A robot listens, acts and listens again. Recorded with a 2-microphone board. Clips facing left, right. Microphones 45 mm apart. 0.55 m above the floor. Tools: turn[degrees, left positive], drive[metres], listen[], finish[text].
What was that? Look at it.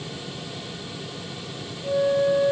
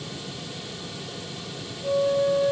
Thought: The flute: about 60° right or 120° right.
Action: turn[-60]
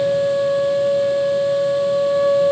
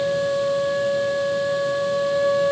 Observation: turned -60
Thought: So it is at 55° right.
Action: turn[-55]
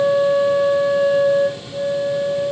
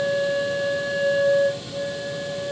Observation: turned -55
Thought: The flute is now 10° left.
Action: turn[10]
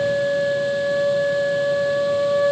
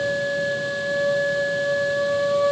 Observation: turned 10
Action: finish[Found it: a flute, straight ahead.]